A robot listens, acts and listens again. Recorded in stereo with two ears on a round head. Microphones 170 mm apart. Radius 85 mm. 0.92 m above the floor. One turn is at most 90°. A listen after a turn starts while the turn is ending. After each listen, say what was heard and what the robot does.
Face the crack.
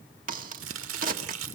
The crack: about 45° right or 135° right. Turn 45° right.
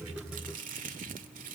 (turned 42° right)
Keep listening.
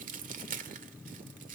I heard a crack, but can't make it out now. It was about 5° right or 90° right.